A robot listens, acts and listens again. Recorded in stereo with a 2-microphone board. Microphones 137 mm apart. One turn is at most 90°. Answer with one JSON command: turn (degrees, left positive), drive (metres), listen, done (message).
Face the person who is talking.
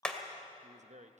{"turn": -60}
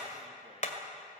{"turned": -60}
{"listen": true}
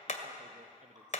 {"listen": true}
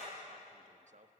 {"turn": -60}
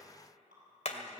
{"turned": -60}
{"listen": true}
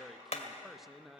{"done": "Facing the man speaking, under 1 m away."}